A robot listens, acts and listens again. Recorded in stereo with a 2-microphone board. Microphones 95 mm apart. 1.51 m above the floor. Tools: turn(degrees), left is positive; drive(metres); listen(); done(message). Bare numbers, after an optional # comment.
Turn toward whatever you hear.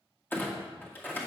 # The clunk: about 20° left or 160° left.
turn(20)
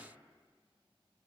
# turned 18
listen()
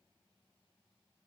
done("I heard a clunk, but can't make it out now. It was about straight ahead or 140° left.")